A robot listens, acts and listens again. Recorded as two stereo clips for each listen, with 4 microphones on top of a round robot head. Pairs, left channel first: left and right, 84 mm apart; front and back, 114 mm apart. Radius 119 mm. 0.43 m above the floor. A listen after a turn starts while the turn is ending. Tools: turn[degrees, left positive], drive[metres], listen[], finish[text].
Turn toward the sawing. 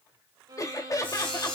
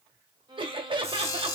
Thought: The sawing: 65° left.
Action: turn[65]
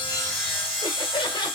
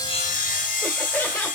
Action: finish[Facing the sawing.]